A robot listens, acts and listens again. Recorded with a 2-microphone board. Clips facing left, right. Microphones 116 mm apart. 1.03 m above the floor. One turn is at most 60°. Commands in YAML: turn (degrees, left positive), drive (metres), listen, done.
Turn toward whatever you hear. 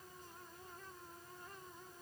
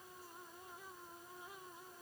listen: true
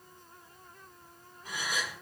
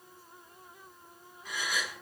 turn: 30
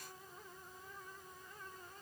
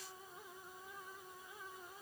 listen: true
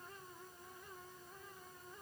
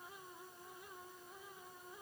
done: "I heard a gasp, but can't make it out now. It was about straight ahead or 120° left."